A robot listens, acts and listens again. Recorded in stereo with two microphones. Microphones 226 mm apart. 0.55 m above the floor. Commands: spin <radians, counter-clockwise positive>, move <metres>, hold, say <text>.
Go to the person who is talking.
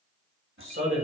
spin -1.13
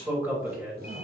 spin -0.17
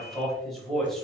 move 1.0
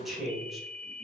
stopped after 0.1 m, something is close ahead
say Blocked. The man speaking is further on, straight ahead.